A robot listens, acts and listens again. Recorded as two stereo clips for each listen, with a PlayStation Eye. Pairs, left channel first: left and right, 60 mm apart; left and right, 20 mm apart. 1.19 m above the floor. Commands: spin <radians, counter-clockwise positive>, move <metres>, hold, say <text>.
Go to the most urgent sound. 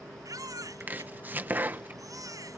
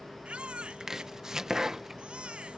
spin -1.57
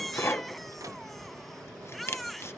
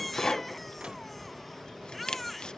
move 1.0
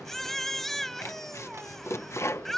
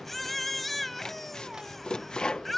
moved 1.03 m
move 1.0
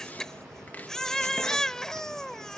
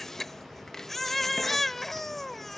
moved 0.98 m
spin 0.17
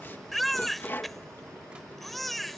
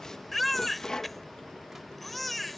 move 1.0
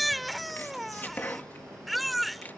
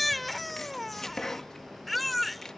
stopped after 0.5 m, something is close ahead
say Arrived at the baby crying, straight ahead.